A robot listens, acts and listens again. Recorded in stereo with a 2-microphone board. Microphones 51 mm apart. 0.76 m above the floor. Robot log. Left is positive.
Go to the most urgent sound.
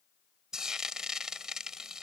cmd idle
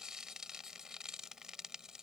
cmd idle
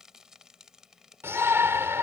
note: The shout: about 55° right or 125° right.
cmd yaw -55
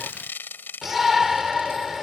cmd fwd 1.0
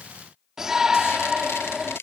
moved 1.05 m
note: The shout is now 10° right.
cmd yaw -10
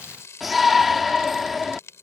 cmd fwd 1.0
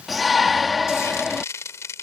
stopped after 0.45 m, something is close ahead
end: I am next to the shout.